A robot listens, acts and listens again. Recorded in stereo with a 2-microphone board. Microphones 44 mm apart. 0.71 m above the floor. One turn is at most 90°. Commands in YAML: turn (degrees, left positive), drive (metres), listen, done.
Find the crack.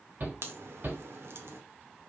turn: -70
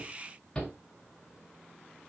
listen: true
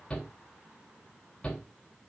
done: "I heard a crack, but can't make it out now. It was about straight ahead or 40° right."